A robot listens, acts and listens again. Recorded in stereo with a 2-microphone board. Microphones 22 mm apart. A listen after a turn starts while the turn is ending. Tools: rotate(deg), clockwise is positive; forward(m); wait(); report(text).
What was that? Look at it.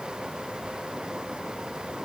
wait()
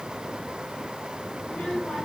rotate(-90)
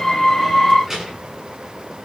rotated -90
rotate(20)
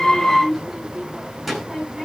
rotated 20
rotate(10)
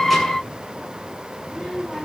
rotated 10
report("Found it: a child speaking, straight ahead, over 4 m away.")